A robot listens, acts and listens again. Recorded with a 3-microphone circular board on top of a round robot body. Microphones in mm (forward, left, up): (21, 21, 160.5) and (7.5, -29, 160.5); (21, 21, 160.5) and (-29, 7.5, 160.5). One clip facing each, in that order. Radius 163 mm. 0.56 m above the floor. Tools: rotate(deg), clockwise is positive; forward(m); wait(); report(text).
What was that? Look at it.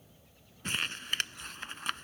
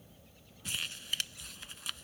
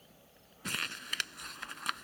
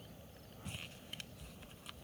rotate(-30)
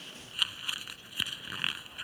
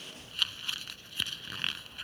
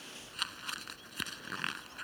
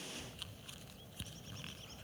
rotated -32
report("Found it: crumpling, straight ahead.")